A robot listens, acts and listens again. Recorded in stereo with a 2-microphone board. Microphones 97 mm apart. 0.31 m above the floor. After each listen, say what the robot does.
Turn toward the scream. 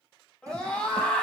Turn 30° left.
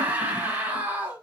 Turn 20° right.
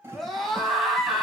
Found it: a scream, straight ahead, 2 to 4 m away.